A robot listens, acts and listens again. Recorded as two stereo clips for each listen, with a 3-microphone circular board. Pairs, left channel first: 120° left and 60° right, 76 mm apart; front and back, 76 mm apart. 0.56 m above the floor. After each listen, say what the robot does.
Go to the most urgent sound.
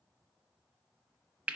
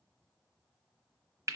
Keep listening.
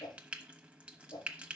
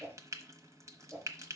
Keep listening.
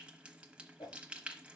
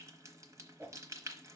I can't make out anything urgent to turn to.